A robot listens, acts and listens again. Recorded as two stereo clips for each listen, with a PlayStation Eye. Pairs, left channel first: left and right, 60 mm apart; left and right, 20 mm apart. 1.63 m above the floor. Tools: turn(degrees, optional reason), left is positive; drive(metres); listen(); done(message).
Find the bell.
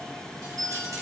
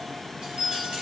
turn(degrees=-90)
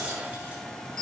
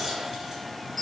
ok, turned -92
turn(degrees=15, reason="So it is at 15° left.")
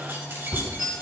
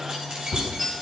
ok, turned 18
done("Found it: a bell, straight ahead, 2 to 4 m away.")